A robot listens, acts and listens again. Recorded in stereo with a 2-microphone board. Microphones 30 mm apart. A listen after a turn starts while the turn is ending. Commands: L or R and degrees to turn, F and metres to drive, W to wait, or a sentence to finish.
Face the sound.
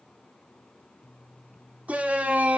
R55
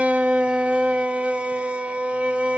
R50
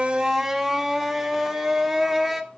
Facing the shout.